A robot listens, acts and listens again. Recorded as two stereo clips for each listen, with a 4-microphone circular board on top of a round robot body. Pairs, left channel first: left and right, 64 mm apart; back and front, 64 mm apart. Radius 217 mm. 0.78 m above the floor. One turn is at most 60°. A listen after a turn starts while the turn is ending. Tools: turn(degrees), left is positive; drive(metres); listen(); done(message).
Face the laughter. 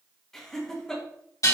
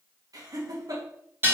turn(degrees=10)
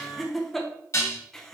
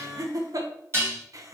turn(degrees=10)
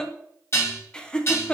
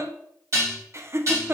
turn(degrees=30)
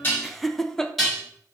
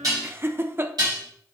turn(degrees=15)
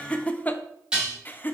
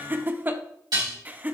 turn(degrees=50)
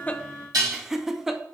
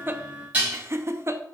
done("Facing the laughter.")